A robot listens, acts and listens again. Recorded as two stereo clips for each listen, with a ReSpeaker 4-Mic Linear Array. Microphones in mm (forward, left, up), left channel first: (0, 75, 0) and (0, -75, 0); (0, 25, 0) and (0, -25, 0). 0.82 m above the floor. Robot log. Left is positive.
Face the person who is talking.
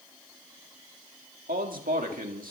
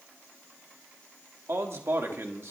note: The man speaking: about 70° right or 110° right.
cmd yaw -70
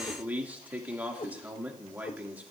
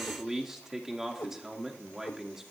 note: So it is at 10° right.
cmd yaw -10
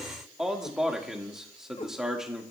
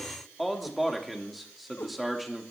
end: Found it: a man speaking, straight ahead, 1 to 2 m away.